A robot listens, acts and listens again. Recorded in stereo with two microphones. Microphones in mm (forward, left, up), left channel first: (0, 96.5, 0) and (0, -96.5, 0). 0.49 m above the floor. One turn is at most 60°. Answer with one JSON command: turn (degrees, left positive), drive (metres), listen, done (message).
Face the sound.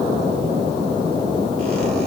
{"listen": true}
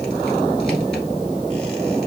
{"listen": true}
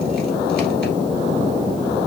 {"done": "I can't make out anything to turn to."}